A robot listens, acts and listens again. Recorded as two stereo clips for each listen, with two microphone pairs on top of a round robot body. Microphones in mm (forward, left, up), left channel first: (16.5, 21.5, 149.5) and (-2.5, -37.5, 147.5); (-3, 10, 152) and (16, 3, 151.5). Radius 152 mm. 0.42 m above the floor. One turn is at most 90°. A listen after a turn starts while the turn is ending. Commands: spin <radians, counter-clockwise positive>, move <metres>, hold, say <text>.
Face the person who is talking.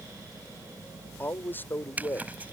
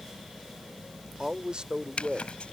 spin 0.26
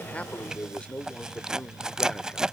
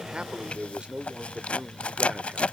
say Facing the man speaking.